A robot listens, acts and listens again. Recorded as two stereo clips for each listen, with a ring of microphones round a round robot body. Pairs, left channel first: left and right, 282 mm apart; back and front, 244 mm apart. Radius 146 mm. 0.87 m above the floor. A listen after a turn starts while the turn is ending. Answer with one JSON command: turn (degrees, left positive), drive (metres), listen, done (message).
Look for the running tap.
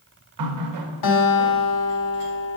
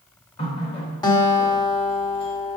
{"turn": -110}
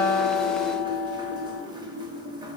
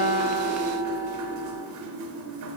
{"turn": -15}
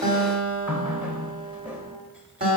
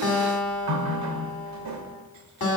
{"done": "Found it: a running tap, straight ahead, under 1 m away."}